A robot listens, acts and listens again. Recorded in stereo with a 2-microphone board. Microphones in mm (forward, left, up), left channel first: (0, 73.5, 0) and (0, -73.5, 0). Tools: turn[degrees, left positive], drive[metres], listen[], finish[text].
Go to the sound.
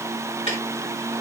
Thought: The ticking: about 45° left or 135° left.
Action: turn[45]
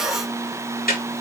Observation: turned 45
Thought: So it is at 90° left.
Action: turn[90]
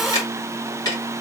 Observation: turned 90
Thought: The ticking is now 25° left.
Action: turn[25]
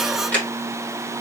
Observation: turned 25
Thought: The ticking is now 10° left.
Action: turn[10]
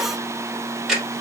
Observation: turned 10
Action: drive[1.0]
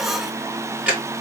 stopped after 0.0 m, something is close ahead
Thought: The ticking is now 10° right.
Action: turn[-10]
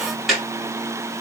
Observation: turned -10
Action: finish[Something is in my way. I am facing the ticking but have not reached it.]